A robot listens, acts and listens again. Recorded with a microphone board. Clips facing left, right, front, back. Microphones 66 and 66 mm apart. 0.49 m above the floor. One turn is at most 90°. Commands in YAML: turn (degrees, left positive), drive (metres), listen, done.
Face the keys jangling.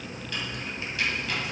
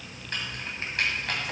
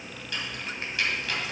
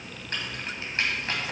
turn: -90
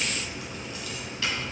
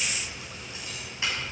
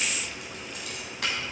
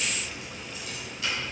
turn: -20
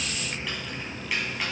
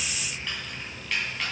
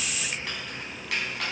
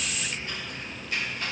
turn: 10
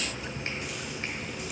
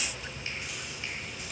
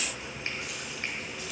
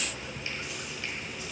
listen: true
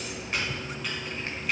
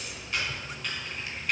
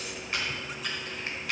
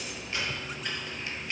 done: "Facing the keys jangling."